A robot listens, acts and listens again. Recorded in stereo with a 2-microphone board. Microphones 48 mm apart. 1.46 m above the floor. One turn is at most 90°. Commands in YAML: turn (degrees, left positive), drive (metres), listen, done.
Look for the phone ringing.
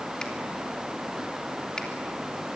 listen: true
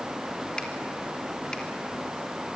listen: true
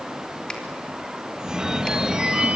turn: -30
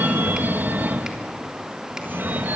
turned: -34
turn: -90
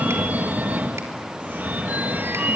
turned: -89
turn: -45
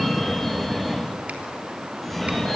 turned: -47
done: "Facing the phone ringing, 1 to 2 m away."